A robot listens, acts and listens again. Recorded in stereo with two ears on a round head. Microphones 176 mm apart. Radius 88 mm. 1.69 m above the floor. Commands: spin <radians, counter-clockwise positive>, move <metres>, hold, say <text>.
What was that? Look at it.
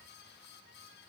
hold
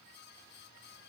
hold
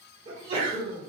spin -0.52
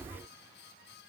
hold
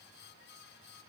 say I heard a sneeze, but can't make it out now. It was about straight ahead or 120° right.